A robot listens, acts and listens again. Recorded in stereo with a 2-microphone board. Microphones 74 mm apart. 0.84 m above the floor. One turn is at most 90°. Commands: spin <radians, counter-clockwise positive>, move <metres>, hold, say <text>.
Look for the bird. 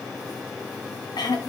hold
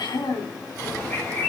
spin 0.35
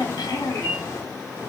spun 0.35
spin 1.57
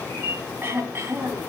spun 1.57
spin 0.52
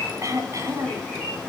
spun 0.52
spin 0.26
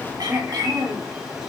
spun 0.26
spin -0.17
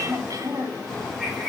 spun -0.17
say Found it: a bird, straight ahead.